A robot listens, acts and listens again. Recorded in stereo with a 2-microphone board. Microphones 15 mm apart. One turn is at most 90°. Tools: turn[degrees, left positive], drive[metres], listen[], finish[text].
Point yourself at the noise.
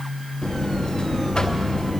Action: turn[90]
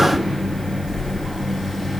Thought: So it is at 10° left.
Action: turn[10]
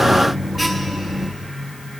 Action: finish[Found it: a buzzer, straight ahead.]